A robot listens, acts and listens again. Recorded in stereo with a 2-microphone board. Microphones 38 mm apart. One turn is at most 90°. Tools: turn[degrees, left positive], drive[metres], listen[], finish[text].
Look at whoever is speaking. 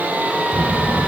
Thought: The child speaking: about 30° right or 150° right.
Action: turn[-30]
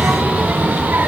Thought: So it is at 120° right.
Action: turn[-90]
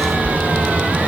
Thought: The child speaking is now 40° right.
Action: turn[-40]
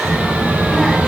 Thought: The child speaking is now 10° left.
Action: turn[10]
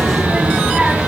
Action: finish[Facing the child speaking, 2 to 4 m away.]